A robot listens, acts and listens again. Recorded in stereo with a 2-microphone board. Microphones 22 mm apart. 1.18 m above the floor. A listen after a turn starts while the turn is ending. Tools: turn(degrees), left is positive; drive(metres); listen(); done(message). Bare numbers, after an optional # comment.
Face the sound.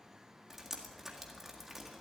turn(-30)
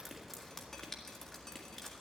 # So it is at 15° left.
turn(15)
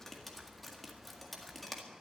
done("Facing the dripping, 1 to 2 m away.")